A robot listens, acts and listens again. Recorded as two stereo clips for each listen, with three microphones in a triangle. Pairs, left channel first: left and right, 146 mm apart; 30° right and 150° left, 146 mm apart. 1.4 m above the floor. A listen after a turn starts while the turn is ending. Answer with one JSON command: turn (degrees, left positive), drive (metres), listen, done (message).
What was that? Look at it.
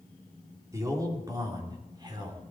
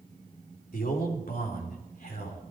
{"turn": -30}
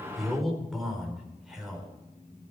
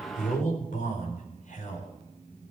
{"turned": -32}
{"done": "Facing the man speaking, over 4 m away."}